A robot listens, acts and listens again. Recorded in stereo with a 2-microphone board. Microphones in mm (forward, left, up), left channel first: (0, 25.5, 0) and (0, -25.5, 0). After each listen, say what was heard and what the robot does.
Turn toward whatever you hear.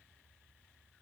Keep listening.
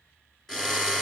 Turn 30° left.
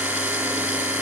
So it is at 20° right. Turn 20° right.
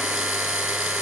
The drill is now 10° right. Turn 10° right.
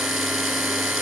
Facing the drill.